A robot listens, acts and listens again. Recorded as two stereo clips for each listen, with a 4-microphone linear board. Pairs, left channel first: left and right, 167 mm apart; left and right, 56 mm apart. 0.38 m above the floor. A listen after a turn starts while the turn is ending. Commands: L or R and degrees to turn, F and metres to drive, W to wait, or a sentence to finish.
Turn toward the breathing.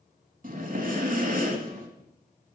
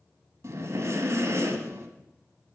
R55
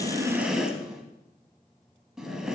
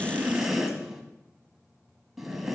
Found it: breathing, straight ahead.